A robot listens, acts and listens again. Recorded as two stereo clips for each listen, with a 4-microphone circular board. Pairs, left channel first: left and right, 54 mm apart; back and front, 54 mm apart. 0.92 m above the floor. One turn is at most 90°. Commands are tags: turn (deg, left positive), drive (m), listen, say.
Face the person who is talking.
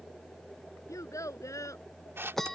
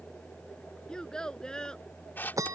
<turn deg="90"/>
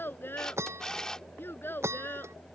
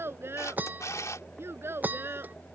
<turn deg="40"/>
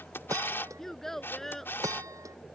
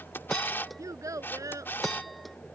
<say>Facing the child speaking.</say>